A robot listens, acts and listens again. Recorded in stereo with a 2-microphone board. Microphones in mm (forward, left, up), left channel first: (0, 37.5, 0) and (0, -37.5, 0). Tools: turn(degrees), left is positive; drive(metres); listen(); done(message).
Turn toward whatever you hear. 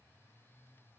listen()
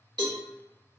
turn(degrees=-90)
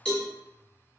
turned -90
turn(degrees=10)
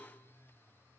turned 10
done("Facing the cowbell, 1 to 2 m away.")